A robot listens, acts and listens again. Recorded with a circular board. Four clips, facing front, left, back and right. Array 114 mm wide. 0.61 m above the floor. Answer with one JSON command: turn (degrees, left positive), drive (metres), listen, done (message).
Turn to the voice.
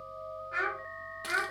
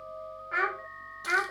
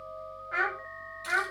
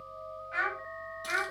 {"turn": 95}
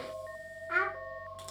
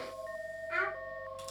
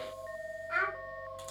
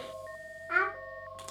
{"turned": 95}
{"turn": -70}
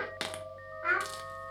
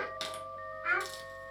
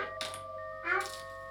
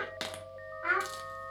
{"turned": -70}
{"turn": -45}
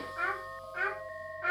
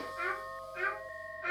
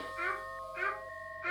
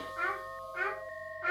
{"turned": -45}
{"turn": -10}
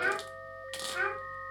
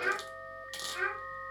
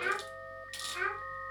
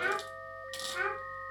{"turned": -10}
{"done": "Found it: a child speaking, straight ahead."}